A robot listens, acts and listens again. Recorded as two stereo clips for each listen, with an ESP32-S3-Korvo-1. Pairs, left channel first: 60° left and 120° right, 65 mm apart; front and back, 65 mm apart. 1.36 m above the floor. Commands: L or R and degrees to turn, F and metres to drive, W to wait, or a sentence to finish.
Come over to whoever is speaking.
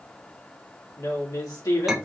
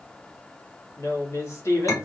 L40
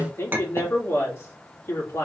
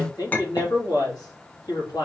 L10
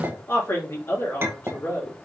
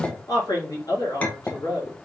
F1.0
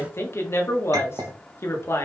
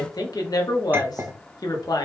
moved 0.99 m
L10
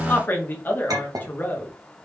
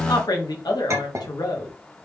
F1.0
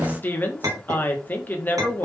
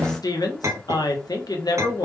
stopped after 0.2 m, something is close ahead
I am next to the woman speaking.